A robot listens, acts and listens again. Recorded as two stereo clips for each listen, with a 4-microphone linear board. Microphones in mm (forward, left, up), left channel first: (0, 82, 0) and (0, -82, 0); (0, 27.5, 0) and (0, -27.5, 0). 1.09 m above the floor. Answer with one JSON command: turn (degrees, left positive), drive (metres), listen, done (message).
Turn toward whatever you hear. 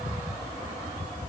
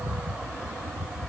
{"listen": true}
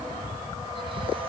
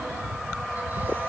{"listen": true}
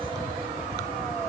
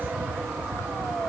{"done": "I can't make out anything to turn to."}